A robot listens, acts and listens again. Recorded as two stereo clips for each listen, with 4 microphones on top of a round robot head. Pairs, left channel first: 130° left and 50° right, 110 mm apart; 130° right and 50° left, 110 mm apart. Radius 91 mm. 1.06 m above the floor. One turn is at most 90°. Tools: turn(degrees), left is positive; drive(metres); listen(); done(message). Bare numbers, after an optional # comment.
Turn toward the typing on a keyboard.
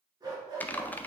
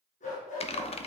# The typing on a keyboard: 155° right.
turn(-90)
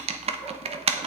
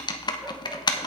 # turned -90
# The typing on a keyboard is now 75° right.
turn(-75)
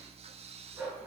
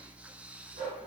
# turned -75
listen()
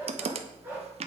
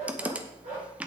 # The typing on a keyboard is now 25° right.
turn(-25)
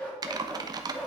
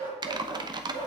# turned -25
done("Facing the typing on a keyboard, under 1 m away.")